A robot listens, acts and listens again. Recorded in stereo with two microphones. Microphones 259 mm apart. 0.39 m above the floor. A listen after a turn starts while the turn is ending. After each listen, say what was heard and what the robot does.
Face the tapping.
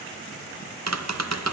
Turn 90° right.
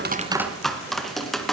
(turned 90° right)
Found it: tapping, straight ahead, 2 to 4 m away.